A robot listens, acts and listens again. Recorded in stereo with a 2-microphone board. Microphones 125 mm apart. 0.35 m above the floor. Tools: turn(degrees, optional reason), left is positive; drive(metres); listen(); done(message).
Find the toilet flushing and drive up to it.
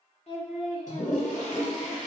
turn(degrees=70, reason="The toilet flushing: about 70° left or 110° left.")
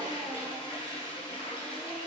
turn(degrees=40, reason="So it is at 40° left.")
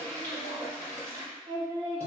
turn(degrees=10, reason="The toilet flushing is now 10° left.")
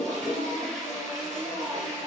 drive(metres=1.0)
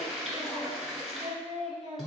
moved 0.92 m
drive(metres=1.0)
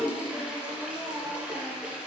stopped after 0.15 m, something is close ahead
done("I am next to the toilet flushing.")